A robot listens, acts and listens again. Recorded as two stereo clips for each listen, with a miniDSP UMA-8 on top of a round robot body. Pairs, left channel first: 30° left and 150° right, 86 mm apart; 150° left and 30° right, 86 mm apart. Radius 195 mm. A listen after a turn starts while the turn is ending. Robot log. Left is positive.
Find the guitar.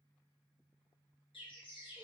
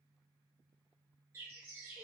cmd idle
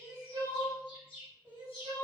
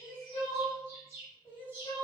cmd idle
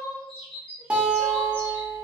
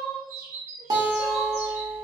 note: The guitar: 70° right.
cmd yaw -70
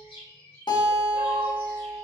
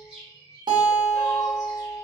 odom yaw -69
end: Found it: a guitar, straight ahead.